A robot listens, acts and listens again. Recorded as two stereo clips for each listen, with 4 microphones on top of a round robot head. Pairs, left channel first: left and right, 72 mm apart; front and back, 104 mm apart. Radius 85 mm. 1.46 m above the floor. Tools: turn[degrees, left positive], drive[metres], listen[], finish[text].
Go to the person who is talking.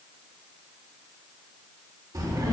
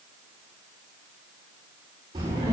Thought: The child speaking: 125° right.
Action: turn[-125]
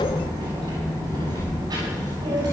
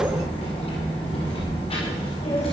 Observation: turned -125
Thought: The child speaking is now 45° right.
Action: turn[-45]
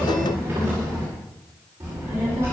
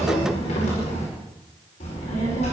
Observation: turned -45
Thought: The child speaking is now 25° right.
Action: turn[-25]
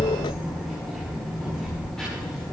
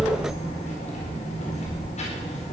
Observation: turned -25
Action: drive[1.0]
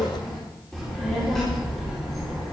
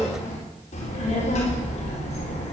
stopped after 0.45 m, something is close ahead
Action: finish[Something is in my way. I am facing the child speaking but have not reached it.]